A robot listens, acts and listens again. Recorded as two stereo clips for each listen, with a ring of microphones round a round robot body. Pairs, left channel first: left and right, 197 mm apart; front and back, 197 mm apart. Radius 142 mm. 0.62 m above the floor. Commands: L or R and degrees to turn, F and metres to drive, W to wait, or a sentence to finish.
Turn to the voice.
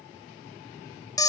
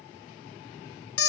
W
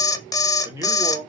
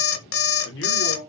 R15
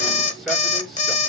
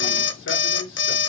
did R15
W
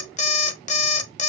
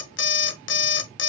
W
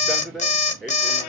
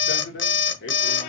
Facing the man speaking.